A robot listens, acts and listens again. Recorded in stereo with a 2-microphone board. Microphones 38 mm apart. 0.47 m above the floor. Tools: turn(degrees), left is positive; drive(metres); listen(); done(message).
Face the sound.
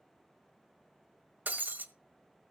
turn(degrees=-60)
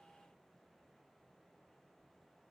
listen()
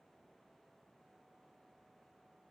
done("I heard breaking glass, but can't make it out now. It was about straight ahead or 60° right.")